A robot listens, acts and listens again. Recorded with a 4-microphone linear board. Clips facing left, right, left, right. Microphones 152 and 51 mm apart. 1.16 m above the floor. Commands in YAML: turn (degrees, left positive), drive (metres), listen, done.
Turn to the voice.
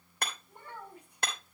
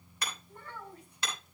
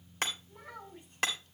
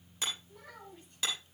turn: 30
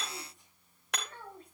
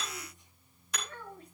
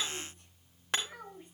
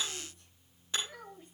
turn: 145
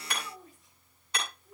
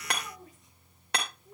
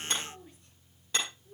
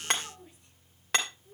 turn: -15
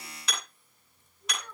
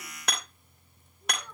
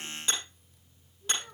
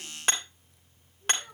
done: "Found it: a child speaking, straight ahead."